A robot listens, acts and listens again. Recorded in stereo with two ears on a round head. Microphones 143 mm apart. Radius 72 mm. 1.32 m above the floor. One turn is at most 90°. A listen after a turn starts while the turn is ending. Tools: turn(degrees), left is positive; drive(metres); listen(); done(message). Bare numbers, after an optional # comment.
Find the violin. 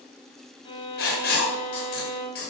# The violin: about 35° left or 145° left.
turn(35)
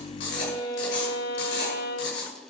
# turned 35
# So it is at 115° left.
turn(90)
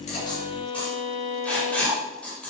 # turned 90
# The violin is now 45° left.
turn(45)
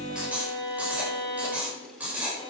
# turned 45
# The violin is now 30° left.
turn(30)
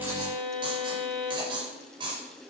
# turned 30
done("Found it: a violin, straight ahead, 2 to 4 m away.")